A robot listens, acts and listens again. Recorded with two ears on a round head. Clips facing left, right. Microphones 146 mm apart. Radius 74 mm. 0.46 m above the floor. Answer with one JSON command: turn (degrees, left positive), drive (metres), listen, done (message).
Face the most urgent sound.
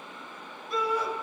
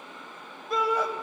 {"turn": -55}
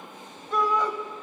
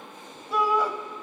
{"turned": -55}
{"done": "Found it: a shout, straight ahead."}